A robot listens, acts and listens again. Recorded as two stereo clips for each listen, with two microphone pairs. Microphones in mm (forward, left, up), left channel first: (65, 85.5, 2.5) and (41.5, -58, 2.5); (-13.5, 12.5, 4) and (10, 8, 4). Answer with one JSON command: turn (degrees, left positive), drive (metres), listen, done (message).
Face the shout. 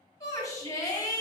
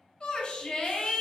{"turn": 140}
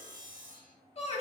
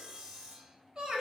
{"turn": 50}
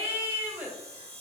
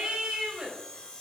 {"turn": -20}
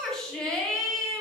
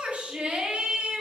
{"done": "Facing the shout."}